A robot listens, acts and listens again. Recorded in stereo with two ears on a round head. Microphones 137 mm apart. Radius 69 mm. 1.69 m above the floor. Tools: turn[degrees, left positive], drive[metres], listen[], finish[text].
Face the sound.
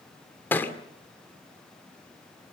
Action: turn[30]
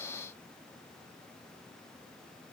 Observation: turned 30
Action: listen[]
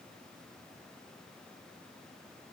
Action: finish[I heard a thud, but can't make it out now. It was about 15° right or 135° left.]